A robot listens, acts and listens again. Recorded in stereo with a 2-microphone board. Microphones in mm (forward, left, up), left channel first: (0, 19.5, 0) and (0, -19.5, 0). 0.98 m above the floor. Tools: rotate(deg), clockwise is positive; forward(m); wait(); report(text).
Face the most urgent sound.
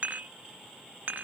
wait()
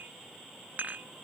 wait()
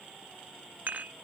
report("I can't make out anything urgent to turn to.")